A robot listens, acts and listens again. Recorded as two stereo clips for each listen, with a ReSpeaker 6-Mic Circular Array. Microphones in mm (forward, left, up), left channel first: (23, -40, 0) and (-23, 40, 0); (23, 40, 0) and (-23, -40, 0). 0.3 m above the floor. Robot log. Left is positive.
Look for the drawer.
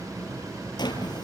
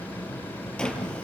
note: The drawer: 20° right.
cmd yaw -20
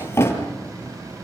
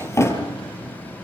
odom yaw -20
end: Facing the drawer, over 4 m away.